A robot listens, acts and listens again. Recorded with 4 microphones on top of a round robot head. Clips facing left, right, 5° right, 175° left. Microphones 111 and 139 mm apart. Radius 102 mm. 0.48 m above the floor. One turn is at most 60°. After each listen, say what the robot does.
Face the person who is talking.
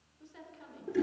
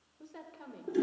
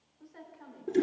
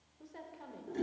Turn 60° right.
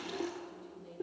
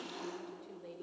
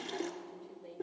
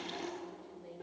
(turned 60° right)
Turn 60° right.
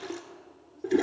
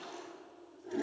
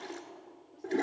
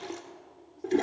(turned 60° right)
Turn 10° right.
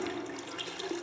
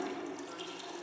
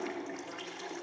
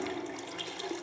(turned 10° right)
Keep listening.
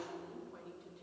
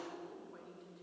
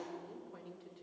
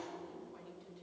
Found it: a woman speaking, straight ahead.